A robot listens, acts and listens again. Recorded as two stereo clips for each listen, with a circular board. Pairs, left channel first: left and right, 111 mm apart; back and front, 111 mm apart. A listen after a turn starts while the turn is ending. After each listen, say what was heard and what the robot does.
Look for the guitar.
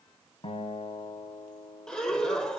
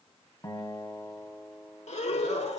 The guitar: 120° left. Turn 120° left.
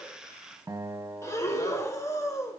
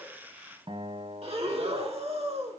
The guitar is now 25° right. Turn 25° right.
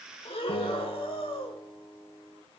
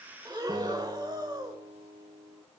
Found it: a guitar, straight ahead.